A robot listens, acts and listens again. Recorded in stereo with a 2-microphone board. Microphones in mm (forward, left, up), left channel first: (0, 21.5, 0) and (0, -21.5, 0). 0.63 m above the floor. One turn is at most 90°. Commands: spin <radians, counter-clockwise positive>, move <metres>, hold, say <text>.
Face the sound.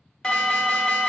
spin 0.35
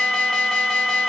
say Found it: an alarm, straight ahead.